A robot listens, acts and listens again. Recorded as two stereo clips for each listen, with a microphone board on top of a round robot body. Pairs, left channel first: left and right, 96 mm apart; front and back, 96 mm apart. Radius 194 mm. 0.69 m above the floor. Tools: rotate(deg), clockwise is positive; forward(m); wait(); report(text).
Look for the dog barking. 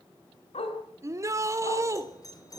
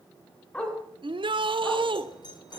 rotate(-80)
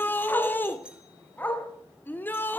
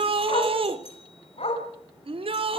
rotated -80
rotate(-15)
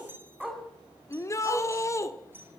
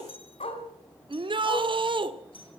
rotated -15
report("Facing the dog barking, over 4 m away.")